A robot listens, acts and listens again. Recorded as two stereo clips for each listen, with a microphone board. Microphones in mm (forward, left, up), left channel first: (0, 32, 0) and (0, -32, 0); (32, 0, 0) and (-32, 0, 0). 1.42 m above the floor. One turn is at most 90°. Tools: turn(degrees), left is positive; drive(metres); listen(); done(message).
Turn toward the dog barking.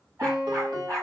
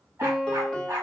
turn(degrees=-90)
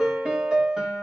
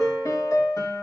turn(degrees=-40)
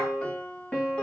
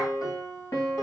listen()
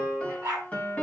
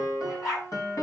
turn(degrees=-35)
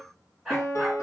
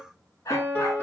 done("Facing the dog barking.")